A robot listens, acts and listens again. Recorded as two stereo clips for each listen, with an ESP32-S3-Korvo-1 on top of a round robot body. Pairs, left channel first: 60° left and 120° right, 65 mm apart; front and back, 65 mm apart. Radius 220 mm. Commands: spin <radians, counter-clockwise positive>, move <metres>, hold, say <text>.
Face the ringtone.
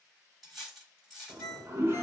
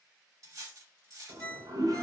spin 1.13
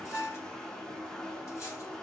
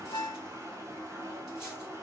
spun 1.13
spin 0.35
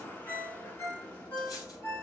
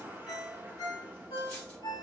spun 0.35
say Facing the ringtone.